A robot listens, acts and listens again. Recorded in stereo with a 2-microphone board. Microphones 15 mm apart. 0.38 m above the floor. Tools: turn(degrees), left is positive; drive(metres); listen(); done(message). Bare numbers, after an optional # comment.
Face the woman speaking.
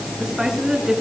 # The woman speaking: about 50° right or 130° right.
turn(-50)
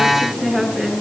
done("Found it: a woman speaking, straight ahead, over 4 m away.")